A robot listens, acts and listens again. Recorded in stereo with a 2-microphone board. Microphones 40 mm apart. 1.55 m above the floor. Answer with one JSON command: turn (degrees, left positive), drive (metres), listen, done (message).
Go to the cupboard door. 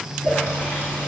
{"listen": true}
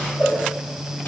{"listen": true}
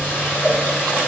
{"done": "I can't make out a cupboard door to turn to."}